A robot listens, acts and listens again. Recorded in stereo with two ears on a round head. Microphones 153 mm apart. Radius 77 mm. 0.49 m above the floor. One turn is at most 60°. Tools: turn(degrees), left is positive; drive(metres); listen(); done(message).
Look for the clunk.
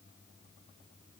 listen()
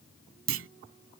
turn(degrees=-60)
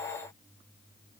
turn(degrees=-30)
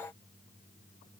done("Facing where the clunk came from. I can't hear it now.")